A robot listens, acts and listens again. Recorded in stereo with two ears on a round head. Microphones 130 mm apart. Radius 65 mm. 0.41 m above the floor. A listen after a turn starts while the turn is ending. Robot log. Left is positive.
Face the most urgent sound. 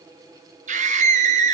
note: The scream: about 55° right or 125° right.
cmd yaw -55
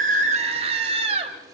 note: So it is at 50° right.
cmd yaw -50
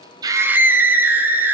note: The scream is now 15° right.
cmd yaw -15
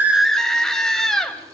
end: Found it: a scream, straight ahead.